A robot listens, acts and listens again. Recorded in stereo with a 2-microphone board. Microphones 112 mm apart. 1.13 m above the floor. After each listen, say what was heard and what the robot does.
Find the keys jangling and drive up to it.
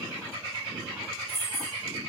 Turn 90° left.
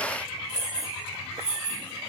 Drive 1.0 m forward.
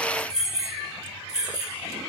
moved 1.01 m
Drive 1.0 m forward.
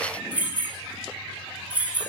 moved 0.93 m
The keys jangling is now 15° right. Turn 15° right.
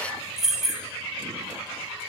Drive 1.0 m forward.
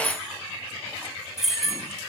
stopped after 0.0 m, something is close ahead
I am next to the keys jangling.